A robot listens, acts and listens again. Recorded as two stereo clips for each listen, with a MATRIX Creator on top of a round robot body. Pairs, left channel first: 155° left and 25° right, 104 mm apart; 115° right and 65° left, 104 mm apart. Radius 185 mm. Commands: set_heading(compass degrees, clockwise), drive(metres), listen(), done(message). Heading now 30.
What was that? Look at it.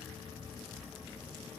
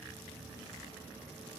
listen()
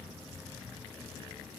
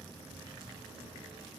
listen()
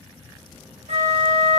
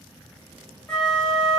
set_heading(60)
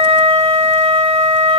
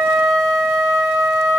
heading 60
done("Facing the flute.")